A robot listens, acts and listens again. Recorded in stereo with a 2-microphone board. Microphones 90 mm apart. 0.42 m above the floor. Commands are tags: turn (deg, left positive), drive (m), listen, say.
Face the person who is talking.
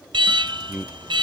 <turn deg="-30"/>
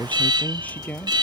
<turn deg="15"/>
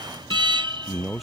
<say>Found it: a man speaking, straight ahead.</say>